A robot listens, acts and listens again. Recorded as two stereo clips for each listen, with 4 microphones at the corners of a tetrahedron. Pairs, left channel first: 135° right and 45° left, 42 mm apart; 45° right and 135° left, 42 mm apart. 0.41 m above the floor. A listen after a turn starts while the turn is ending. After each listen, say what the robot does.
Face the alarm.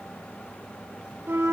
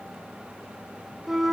Keep listening.
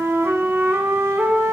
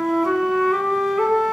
Keep listening.
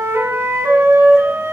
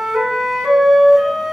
I can't make out an alarm, only a flute.